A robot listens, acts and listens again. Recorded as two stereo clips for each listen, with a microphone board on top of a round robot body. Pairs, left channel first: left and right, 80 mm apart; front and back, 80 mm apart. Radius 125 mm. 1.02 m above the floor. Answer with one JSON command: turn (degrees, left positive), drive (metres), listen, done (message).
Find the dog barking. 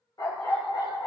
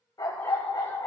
{"turn": 45}
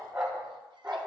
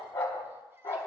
{"done": "Found it: a dog barking, straight ahead, 2 to 4 m away."}